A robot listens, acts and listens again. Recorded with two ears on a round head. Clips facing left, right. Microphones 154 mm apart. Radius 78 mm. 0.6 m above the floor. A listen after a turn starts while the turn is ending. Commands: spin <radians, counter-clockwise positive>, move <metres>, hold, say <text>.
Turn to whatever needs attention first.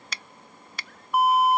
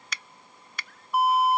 spin 0.87
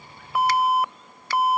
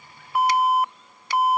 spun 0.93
spin 1.31
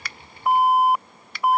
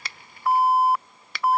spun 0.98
spin 0.26
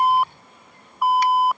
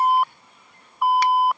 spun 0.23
say Facing the alarm.